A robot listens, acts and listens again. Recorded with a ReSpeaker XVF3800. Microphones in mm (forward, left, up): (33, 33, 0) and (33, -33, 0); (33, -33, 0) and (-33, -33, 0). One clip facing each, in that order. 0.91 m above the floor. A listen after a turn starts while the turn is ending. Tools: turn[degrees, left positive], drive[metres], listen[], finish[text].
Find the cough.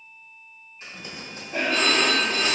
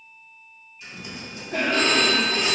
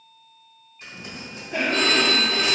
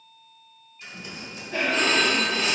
Thought: The cough: 80° right.
Action: turn[-80]
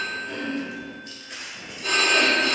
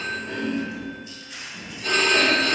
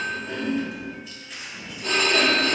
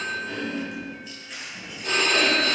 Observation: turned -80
Thought: The cough is now 30° right.
Action: turn[-30]
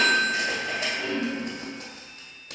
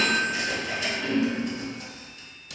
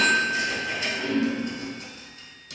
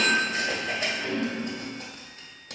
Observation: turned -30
Thought: The cough is now 10° left.
Action: turn[10]
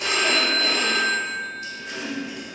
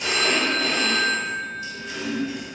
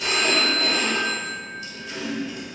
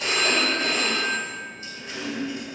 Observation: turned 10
Action: finish[Found it: a cough, straight ahead.]